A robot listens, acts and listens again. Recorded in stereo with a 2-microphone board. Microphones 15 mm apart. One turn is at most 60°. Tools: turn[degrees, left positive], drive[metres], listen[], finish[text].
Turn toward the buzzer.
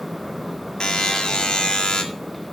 Thought: The buzzer: about 65° left or 115° left.
Action: turn[60]
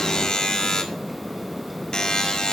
Thought: So it is at 55° left.
Action: turn[55]
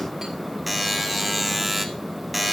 Action: finish[Found it: a buzzer, straight ahead.]